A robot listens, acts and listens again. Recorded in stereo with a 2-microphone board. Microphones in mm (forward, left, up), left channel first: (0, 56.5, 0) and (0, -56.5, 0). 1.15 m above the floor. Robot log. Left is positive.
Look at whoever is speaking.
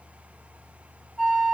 cmd idle
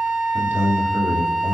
note: The man speaking: about 15° right or 165° right.
cmd yaw -15
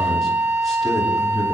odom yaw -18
cmd idle
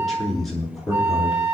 end: Found it: a man speaking, straight ahead.